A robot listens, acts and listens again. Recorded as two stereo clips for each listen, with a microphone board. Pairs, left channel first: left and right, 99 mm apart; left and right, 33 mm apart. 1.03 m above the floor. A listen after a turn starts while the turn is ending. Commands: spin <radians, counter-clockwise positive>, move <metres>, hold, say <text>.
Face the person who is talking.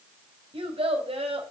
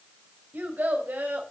spin -1.31
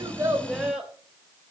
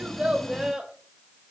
spin -0.17
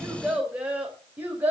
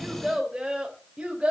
spin -0.35
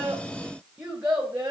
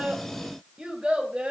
spin -0.26
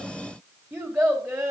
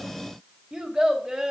say Facing the child speaking, 2 to 4 m away.